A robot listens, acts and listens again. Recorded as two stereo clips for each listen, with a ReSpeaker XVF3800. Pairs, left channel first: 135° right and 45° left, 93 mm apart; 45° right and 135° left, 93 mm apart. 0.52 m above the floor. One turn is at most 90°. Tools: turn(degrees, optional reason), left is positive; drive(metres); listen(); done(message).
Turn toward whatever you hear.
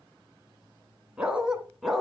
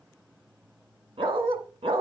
turn(degrees=90, reason="The dog barking: 135° left.")
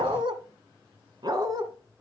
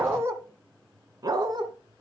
turn(degrees=90, reason="The dog barking is now 90° left.")
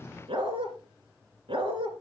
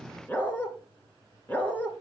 turn(degrees=30, reason="The dog barking is now 30° left.")
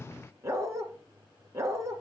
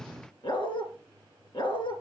turn(degrees=-15, reason="The dog barking is now 15° right.")
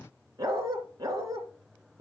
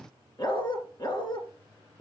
done("Facing the dog barking.")